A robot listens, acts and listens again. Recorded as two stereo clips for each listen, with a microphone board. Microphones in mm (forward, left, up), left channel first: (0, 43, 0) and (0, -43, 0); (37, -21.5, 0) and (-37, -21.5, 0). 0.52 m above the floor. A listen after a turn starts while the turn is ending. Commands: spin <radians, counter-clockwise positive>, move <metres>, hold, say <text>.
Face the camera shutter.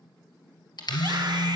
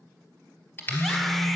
spin 1.13
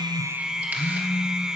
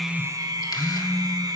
hold
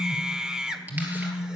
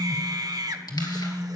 hold
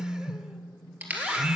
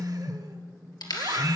spin -0.35
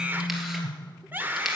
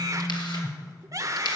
hold
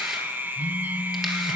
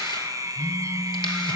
hold
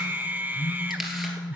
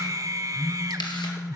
say Facing where the camera shutter came from. I can't hear it now.